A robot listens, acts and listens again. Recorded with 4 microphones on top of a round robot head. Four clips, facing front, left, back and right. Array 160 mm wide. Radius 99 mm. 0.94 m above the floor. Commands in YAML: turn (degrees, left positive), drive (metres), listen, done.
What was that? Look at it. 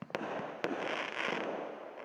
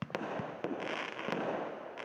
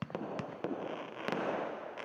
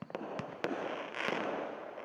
listen: true
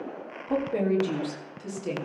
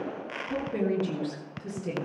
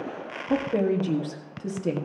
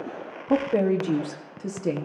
turn: -120
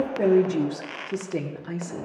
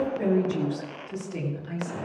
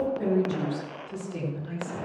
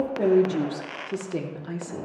turn: -40
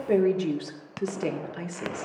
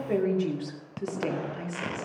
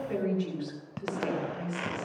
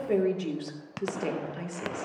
done: "Facing the woman speaking, 2 to 4 m away."